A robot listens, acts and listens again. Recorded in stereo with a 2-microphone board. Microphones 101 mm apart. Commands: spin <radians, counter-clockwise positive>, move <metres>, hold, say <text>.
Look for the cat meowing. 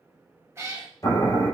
spin -0.44
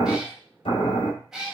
say Facing the cat meowing, 1 to 2 m away.